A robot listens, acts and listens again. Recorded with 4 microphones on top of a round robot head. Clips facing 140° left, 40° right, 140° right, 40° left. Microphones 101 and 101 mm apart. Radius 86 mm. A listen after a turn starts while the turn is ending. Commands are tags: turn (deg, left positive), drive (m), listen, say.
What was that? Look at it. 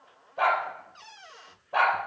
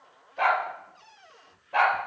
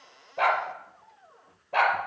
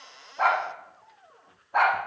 <turn deg="-145"/>
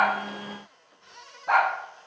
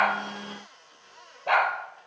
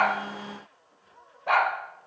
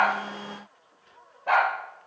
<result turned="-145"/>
<turn deg="-45"/>
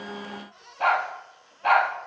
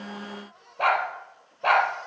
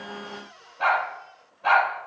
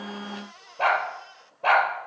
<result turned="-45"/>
<say>Found it: a dog barking, straight ahead, 2 to 4 m away.</say>